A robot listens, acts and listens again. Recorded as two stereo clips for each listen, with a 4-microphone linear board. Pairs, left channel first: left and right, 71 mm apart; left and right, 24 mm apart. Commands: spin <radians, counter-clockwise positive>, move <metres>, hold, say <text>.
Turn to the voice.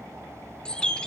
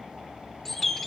hold
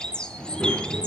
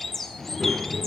spin -0.52
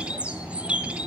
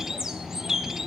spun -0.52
spin 0.35
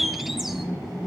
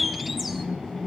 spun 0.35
say Facing the child speaking.